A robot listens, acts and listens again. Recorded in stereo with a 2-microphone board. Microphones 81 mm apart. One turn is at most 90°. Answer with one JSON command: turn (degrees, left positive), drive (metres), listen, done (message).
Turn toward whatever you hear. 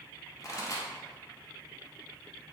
{"turn": 40}
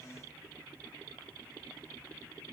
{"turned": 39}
{"listen": true}
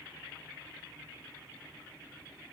{"done": "I heard a pop, but can't make it out now. It was about straight ahead or 100° left."}